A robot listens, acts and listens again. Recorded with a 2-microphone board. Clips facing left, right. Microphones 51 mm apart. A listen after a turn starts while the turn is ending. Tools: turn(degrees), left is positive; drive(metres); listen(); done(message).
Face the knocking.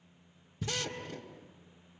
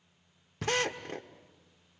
turn(degrees=-65)
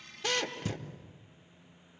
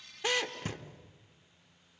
turn(degrees=-40)
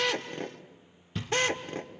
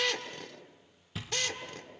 done("Facing the knocking.")